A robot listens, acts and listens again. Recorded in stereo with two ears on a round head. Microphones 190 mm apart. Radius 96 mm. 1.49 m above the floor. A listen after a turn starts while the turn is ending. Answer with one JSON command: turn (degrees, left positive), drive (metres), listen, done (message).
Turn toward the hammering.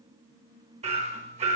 {"turn": -30}
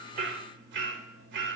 {"turn": -115}
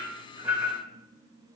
{"done": "Facing the hammering, 1 to 2 m away."}